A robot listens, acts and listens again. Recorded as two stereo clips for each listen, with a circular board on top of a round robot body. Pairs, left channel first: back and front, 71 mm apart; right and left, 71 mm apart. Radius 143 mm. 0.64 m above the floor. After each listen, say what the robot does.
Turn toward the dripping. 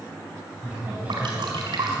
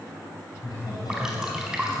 Found it: dripping, straight ahead, over 4 m away.